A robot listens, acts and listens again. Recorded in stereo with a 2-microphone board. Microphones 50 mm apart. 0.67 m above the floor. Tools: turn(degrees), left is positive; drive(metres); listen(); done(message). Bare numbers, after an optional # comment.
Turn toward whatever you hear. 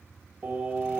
# The singing: about 35° right or 145° right.
turn(-35)
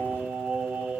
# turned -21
# The singing: about 20° right or 160° right.
turn(-20)
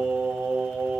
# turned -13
done("Facing the singing.")